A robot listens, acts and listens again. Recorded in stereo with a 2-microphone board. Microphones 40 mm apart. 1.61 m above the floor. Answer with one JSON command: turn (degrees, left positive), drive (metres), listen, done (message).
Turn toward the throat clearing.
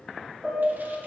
{"listen": true}
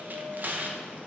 {"listen": true}
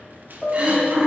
{"turn": -45}
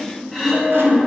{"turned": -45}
{"done": "Found it: throat clearing, straight ahead, 1 to 2 m away."}